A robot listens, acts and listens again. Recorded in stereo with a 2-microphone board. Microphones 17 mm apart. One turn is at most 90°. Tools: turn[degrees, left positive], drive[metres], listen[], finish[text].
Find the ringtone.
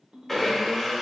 Thought: The ringtone: about 50° right or 130° right.
Action: turn[-50]
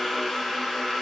Action: listen[]
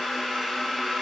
Action: listen[]
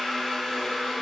Action: finish[I heard a ringtone, but can't make it out now. It was about straight ahead or 80° right.]